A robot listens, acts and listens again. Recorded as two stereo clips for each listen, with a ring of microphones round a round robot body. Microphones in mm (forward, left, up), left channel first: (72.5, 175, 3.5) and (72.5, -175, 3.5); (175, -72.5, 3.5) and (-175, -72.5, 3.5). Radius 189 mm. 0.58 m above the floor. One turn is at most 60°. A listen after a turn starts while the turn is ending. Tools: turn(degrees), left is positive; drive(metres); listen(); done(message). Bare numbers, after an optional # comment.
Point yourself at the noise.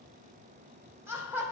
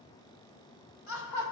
done("Facing the laughter, 2 to 4 m away.")